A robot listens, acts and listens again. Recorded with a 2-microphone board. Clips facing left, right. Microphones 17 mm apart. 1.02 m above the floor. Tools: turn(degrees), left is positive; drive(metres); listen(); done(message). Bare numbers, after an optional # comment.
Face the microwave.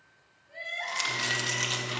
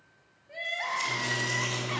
# The microwave: about 30° left or 150° left.
turn(30)
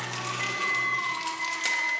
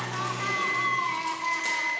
done("Found it: a microwave, straight ahead, 2 to 4 m away.")